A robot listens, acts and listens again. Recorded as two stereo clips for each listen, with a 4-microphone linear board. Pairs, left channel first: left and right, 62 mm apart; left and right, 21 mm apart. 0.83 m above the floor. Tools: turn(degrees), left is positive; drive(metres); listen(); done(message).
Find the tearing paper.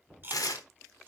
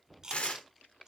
turn(degrees=70)
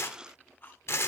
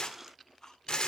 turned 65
turn(degrees=45)
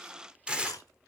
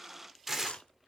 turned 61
turn(degrees=-15)
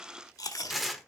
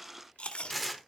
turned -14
done("Found it: tearing paper, straight ahead.")